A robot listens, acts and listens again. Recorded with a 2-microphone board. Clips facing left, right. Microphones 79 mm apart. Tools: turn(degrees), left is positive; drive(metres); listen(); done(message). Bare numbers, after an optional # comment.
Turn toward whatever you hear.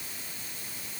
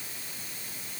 listen()
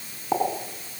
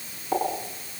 # The pop: about 20° left or 160° left.
turn(20)
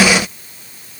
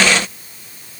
listen()
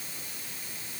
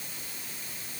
done("I heard a pop, but can't make it out now. It was about straight ahead or 140° left.")